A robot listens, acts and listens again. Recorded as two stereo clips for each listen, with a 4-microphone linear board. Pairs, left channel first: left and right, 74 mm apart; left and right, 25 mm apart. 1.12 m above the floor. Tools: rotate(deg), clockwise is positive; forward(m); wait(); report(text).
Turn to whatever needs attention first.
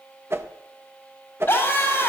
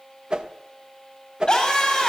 rotate(-25)
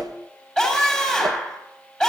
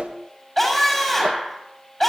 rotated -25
report("Found it: a scream, straight ahead, over 4 m away.")